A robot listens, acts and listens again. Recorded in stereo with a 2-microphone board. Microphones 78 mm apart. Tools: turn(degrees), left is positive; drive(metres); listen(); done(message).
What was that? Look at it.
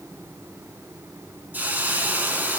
turn(degrees=-20)
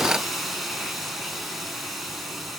done("Facing the hiss.")